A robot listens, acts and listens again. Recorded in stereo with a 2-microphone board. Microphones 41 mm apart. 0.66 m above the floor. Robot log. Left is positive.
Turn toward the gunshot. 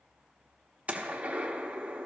note: The gunshot: about 35° right or 145° right.
cmd yaw -35
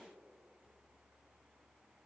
cmd idle
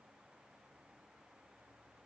end: I heard a gunshot, but can't make it out now. It was about straight ahead or 110° right.